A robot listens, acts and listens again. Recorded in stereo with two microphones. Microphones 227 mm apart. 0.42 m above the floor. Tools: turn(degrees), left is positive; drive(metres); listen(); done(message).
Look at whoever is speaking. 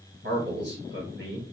turn(degrees=-50)
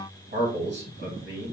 turn(degrees=-70)
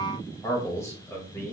turn(degrees=15)
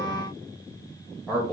done("Found it: a man speaking, straight ahead, 1 to 2 m away.")